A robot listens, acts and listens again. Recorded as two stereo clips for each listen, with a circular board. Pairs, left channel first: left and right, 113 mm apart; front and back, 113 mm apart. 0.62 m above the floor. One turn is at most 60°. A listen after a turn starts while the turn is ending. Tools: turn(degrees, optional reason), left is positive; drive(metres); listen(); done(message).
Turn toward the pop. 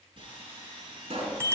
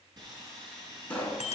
turn(degrees=-60, reason="The pop: 80° right.")
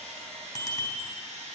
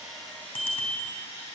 turn(degrees=-20, reason="Nothing new. It was at 20° right.")
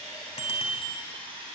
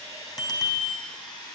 done("Facing where the pop came from. I can't hear it now.")